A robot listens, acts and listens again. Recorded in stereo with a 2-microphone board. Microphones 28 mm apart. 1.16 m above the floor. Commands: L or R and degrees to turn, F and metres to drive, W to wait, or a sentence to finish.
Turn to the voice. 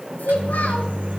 L90
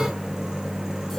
L10
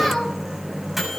Facing the child speaking, 2 to 4 m away.